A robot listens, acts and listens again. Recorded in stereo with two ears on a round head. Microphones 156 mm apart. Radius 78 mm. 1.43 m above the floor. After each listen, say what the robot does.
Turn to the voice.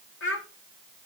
Turn 90° left.
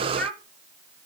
Facing the child speaking, 2 to 4 m away.